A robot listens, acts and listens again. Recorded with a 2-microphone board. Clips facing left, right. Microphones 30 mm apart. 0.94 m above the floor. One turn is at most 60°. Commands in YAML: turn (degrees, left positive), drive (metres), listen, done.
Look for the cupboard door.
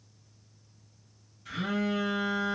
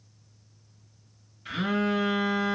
listen: true
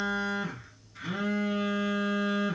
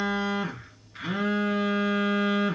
listen: true
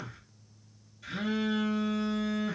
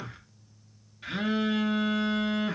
done: "I can't make out a cupboard door, only a phone buzzing."